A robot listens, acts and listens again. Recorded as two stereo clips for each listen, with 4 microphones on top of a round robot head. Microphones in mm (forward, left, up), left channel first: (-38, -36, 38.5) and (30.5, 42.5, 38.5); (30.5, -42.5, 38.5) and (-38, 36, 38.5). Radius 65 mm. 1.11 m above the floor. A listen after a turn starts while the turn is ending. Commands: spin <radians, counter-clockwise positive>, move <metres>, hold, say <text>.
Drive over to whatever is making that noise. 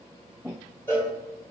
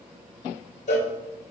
spin -1.05
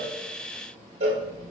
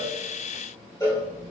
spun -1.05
spin 0.26
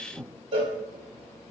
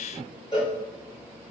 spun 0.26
move 1.0
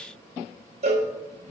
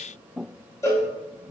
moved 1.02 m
spin 0.35
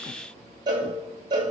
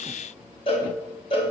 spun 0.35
move 1.0
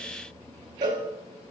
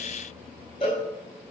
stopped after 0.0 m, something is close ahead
say I am next to the cowbell.